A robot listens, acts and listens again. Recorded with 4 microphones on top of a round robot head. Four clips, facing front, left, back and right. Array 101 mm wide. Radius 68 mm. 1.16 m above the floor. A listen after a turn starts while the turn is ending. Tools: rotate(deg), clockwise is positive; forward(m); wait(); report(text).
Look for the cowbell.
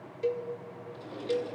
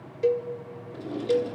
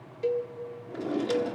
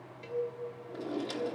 rotate(-95)
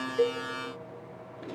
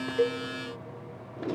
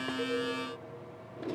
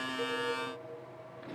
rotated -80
rotate(-15)
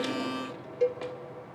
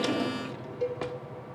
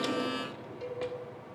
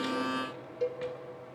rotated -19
report("Facing the cowbell.")